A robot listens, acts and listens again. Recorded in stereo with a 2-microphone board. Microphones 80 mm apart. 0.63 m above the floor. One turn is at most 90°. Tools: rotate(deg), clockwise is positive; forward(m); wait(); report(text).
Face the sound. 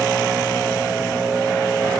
wait()
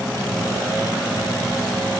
wait()
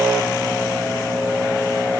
report("I can't make out anything to turn to.")